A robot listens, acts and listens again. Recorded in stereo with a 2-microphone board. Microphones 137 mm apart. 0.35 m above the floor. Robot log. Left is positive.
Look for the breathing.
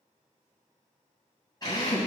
cmd idle
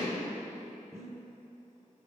note: The breathing: about 25° right or 155° right.
cmd yaw -25
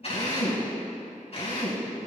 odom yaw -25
cmd idle
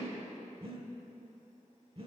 note: So it is at 130° right.
cmd yaw -130
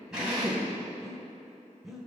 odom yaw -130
end: Facing the breathing.